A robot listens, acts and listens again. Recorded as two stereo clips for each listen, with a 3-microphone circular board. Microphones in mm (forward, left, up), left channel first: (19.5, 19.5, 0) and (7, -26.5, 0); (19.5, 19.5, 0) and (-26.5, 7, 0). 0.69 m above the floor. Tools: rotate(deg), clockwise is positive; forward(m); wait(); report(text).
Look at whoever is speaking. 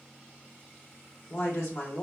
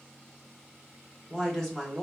rotate(-95)
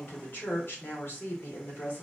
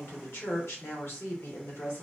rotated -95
rotate(-40)
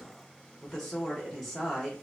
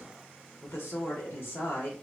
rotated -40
report("Facing the woman speaking, 1 to 2 m away.")